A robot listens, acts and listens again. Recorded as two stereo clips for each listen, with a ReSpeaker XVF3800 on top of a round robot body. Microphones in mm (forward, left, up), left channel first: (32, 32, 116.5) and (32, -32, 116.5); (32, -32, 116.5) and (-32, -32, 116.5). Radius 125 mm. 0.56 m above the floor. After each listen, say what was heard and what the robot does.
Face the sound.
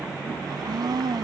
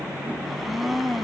The blender: 95° right. Turn 95° right.
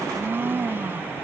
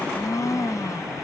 The blender is now 35° right. Turn 35° right.
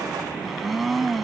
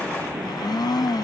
Facing the blender.